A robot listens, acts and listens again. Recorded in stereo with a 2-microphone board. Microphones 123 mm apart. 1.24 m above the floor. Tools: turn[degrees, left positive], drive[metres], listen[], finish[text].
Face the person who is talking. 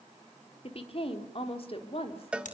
Thought: The woman speaking: about 50° left or 130° left.
Action: turn[50]
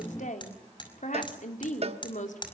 Thought: So it is at 80° left.
Action: turn[80]
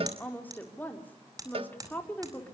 Thought: The woman speaking is now 15° left.
Action: turn[15]
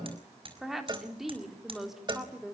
Action: finish[Found it: a woman speaking, straight ahead.]